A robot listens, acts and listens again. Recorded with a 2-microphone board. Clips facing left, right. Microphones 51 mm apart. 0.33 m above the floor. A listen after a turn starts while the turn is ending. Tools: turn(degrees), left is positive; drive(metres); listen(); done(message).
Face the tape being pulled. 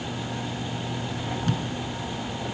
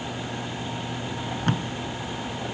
turn(degrees=-40)
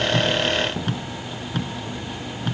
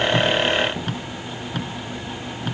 done("Facing the tape being pulled.")